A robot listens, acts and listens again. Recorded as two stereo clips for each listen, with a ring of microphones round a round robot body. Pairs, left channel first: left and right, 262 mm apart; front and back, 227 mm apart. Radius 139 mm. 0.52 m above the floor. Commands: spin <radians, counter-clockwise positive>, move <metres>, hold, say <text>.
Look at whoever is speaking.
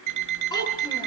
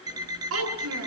spin 2.88
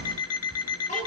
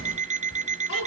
spin 0.44
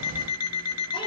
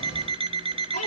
hold
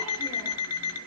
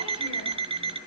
hold
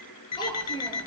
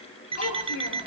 spin 0.26
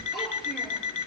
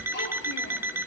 hold
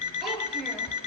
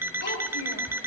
say Found it: a child speaking, straight ahead, over 4 m away.